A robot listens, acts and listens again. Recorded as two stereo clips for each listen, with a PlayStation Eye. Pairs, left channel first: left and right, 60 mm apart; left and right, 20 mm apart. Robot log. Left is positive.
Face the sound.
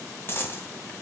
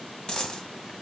note: The dropped coin: about 45° left or 135° left.
cmd yaw +45
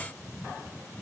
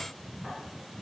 cmd idle
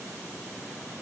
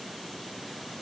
end: I heard a dropped coin, but can't make it out now. It was about straight ahead or 90° left.